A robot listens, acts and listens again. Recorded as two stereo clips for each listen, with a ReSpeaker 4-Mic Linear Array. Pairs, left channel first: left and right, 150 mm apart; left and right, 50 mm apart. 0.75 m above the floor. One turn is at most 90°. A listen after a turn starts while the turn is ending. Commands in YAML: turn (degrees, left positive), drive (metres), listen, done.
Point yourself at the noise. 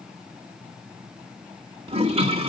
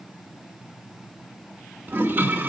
turn: -40
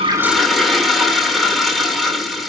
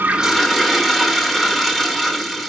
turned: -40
done: "Found it: a toilet flushing, straight ahead, 1 to 2 m away."